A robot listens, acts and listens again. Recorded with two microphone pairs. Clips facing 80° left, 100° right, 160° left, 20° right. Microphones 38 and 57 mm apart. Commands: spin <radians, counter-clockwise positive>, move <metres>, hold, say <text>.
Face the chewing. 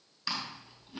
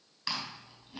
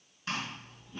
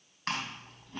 spin -0.26
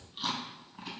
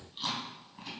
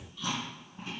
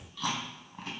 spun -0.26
say Found it: chewing, straight ahead.